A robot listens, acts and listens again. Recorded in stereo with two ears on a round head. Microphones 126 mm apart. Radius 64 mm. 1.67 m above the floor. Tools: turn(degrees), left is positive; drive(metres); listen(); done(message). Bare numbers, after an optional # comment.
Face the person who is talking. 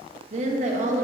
# The woman speaking: about 50° right or 130° right.
turn(-50)
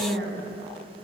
# So it is at 80° right.
turn(-80)
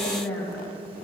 # The woman speaking is now 10° left.
turn(10)
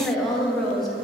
done("Facing the woman speaking, under 1 m away.")